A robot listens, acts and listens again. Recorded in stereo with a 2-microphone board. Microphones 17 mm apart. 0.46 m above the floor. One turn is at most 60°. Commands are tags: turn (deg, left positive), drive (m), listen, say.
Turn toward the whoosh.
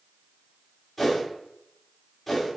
<turn deg="30"/>
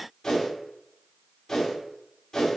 <turn deg="60"/>
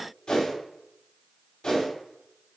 <turn deg="60"/>
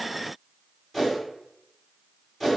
<turn deg="15"/>
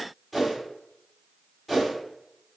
<say>Found it: a whoosh, straight ahead, 1 to 2 m away.</say>